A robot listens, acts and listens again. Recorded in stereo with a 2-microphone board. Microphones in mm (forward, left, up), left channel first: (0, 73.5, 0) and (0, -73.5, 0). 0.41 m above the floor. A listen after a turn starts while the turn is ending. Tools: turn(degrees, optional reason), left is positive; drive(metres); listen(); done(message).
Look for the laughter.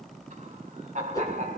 turn(degrees=-55, reason="The laughter: about 55° right or 125° right.")
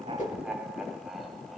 done("Found it: laughter, straight ahead.")